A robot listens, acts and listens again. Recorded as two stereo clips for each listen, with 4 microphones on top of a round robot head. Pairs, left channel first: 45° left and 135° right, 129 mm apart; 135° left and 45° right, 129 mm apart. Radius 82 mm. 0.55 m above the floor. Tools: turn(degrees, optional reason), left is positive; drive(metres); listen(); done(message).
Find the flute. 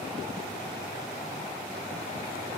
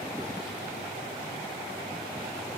listen()
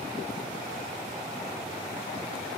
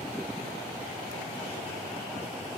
listen()
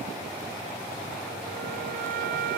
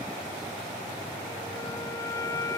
turn(degrees=-155, reason="The flute: 155° right.")
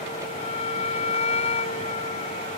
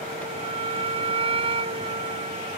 done("Facing the flute.")